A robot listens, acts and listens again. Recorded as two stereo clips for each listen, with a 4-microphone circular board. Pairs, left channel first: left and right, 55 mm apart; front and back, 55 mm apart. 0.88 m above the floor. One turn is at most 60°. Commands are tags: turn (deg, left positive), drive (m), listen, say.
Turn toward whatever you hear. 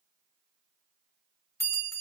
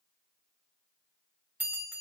<turn deg="60"/>
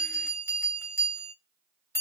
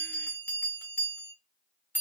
<turn deg="60"/>
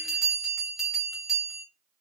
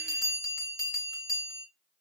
<say>Found it: a bell, straight ahead, 1 to 2 m away.</say>